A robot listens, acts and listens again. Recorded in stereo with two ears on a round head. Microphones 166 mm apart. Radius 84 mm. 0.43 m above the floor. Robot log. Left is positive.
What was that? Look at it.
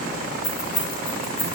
note: The keys jangling: about 25° left or 155° left.
cmd yaw +25
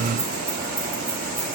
cmd idle
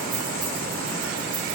cmd idle
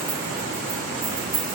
note: So it is at 15° right.
cmd yaw -15
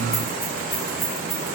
end: Found it: keys jangling, straight ahead.